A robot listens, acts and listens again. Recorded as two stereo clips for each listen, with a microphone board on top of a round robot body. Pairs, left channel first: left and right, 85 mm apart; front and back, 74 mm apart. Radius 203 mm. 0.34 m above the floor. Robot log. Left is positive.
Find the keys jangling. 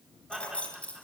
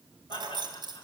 note: The keys jangling: 165° left.
cmd yaw +165
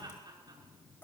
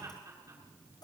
cmd idle
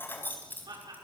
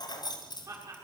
note: The keys jangling is now 20° left.
cmd yaw +20
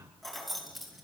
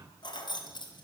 end: Facing the keys jangling.